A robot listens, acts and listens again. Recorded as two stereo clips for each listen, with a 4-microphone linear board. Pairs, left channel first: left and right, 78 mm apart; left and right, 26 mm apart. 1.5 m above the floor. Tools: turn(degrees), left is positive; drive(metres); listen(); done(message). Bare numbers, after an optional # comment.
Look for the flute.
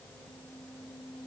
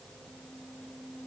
listen()
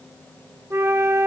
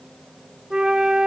# The flute: about 35° right or 145° right.
turn(-35)
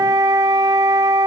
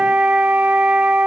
# So it is at 105° right.
turn(-105)
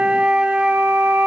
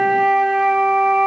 # The flute is now 20° right.
turn(-20)
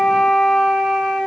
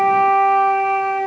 done("Found it: a flute, straight ahead, under 1 m away.")